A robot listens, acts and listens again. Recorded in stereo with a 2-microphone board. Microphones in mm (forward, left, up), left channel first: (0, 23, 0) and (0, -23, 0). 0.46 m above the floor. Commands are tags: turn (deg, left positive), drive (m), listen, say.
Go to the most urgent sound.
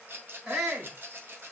<turn deg="-20"/>
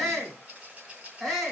<drive m="1.0"/>
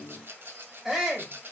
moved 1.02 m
<turn deg="-10"/>
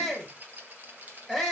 <drive m="1.0"/>
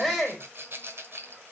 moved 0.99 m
<drive m="1.0"/>
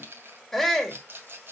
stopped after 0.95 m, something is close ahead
<turn deg="10"/>
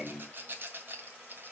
<listen/>
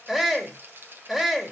<say>Arrived at the shout, straight ahead.</say>